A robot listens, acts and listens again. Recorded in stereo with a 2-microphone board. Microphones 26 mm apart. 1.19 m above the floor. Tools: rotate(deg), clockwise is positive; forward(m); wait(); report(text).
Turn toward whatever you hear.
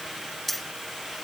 rotate(-30)
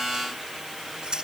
rotate(30)
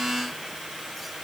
wait()
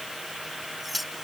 report("Facing the keys jangling.")